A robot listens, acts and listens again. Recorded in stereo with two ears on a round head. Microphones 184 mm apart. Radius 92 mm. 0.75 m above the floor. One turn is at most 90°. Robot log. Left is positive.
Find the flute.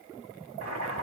cmd idle
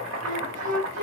note: The flute: about 40° right or 140° right.
cmd yaw -40
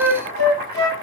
note: So it is at 95° right.
cmd yaw -90
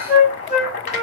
note: The flute is now 10° right.
cmd yaw -10
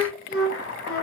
end: Found it: a flute, straight ahead.